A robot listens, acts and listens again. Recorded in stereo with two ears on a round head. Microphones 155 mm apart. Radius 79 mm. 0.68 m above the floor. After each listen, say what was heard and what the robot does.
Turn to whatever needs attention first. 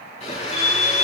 The alarm: about 35° left or 145° left. Turn 35° left.
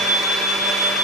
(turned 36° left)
So it is at 105° left. Turn 105° left.
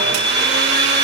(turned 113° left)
Keep listening.
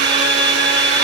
Keep listening.
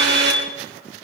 Found it: an alarm, straight ahead.